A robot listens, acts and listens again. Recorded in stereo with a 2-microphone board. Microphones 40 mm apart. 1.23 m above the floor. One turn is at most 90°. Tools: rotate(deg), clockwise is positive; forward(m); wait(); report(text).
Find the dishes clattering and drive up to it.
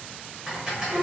rotate(20)
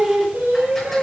wait()
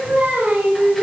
wait()
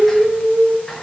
report("I heard dishes clattering, but can't make it out now. It was about straight ahead or 140° right. I did not reach it.")